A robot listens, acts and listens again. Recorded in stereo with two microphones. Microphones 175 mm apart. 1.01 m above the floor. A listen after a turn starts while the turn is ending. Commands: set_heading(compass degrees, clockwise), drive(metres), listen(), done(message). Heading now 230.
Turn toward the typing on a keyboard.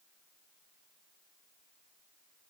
listen()
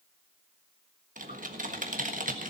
set_heading(285)
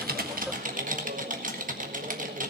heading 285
set_heading(350)
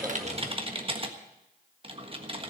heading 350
set_heading(30)
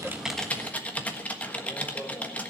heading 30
set_heading(20)
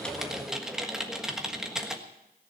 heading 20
done("Found it: typing on a keyboard, straight ahead.")